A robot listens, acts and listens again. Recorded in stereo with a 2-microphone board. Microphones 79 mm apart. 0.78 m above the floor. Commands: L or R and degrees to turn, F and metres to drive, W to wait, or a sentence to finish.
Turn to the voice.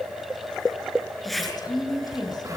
L60
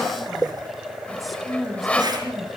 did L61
Facing the woman speaking, over 4 m away.